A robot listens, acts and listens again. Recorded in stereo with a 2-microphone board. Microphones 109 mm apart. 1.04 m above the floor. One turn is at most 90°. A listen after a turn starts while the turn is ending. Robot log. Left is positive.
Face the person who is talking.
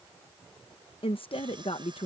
note: The woman speaking: about 55° left or 125° left.
cmd yaw +55
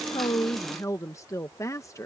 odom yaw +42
note: So it is at 35° left.
cmd yaw +35
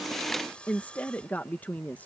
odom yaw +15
note: The woman speaking is now 15° left.
cmd yaw +15
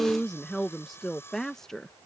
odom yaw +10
end: Facing the woman speaking.